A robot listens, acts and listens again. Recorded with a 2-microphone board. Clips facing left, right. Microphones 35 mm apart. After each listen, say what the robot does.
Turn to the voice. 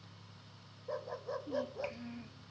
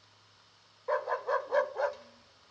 Turn 50° left.
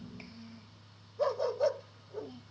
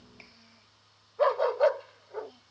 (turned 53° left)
Found it: a child speaking, straight ahead.